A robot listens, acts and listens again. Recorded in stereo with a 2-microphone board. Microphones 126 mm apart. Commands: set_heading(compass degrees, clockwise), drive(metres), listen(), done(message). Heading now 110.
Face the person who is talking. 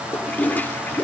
listen()
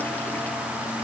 listen()
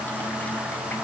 done("I can't make out anyone speaking to turn to.")